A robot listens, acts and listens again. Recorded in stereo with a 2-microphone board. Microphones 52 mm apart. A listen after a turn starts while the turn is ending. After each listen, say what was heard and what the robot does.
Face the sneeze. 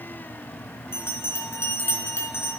Keep listening.
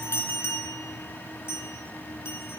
Keep listening.
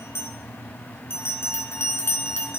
I can't make out a sneeze to turn to.